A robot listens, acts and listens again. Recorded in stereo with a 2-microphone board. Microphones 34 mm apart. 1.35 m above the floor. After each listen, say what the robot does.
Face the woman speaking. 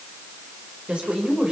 Turn 35° right.
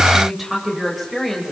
Found it: a woman speaking, straight ahead, over 4 m away.